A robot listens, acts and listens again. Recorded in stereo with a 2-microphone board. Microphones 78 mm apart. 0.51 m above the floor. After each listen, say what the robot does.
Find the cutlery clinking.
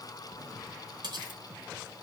Turn 70° right.
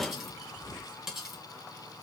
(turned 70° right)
Found it: cutlery clinking, straight ahead, 2 to 4 m away.